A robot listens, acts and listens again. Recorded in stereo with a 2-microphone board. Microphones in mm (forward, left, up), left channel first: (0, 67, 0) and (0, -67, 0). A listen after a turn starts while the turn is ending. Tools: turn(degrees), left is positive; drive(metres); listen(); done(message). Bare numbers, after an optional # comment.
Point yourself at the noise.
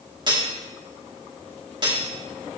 # The cutlery clinking: about 35° right or 145° right.
turn(-35)
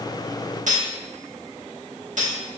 # So it is at 110° right.
turn(-110)
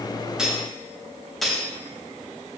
done("Facing the cutlery clinking.")